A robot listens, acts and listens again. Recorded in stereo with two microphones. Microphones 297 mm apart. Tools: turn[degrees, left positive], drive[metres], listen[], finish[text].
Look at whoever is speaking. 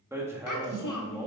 Thought: The child speaking: about 75° left or 105° left.
Action: turn[75]
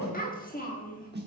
Thought: So it is at 25° left.
Action: turn[25]
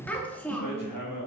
Action: finish[Found it: a child speaking, straight ahead, 1 to 2 m away.]